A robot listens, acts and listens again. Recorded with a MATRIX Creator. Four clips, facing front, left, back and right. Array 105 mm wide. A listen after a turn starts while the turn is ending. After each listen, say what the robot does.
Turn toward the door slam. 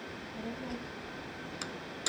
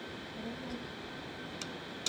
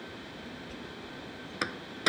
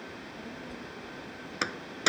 Turn 125° right.
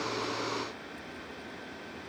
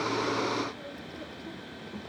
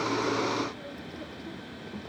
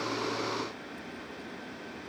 Facing where the door slam came from. I can't hear it now.